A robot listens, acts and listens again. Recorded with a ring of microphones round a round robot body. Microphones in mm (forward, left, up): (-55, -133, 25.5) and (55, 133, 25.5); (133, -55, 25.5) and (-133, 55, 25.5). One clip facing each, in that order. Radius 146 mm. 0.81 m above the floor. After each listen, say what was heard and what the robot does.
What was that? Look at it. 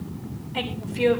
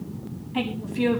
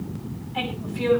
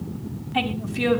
The woman speaking: 140° left. Turn 140° left.
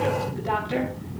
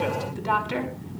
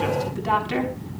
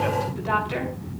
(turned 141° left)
Found it: a woman speaking, straight ahead.